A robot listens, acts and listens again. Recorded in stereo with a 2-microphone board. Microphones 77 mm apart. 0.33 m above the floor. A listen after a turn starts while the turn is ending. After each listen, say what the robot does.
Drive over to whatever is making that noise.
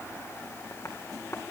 Turn 40° left.
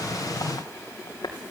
Turn 100° left.
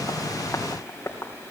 Turn 40° left.
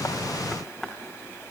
Drive 1.0 m forward.
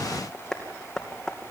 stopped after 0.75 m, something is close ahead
Blocked. The tapping is further on, straight ahead.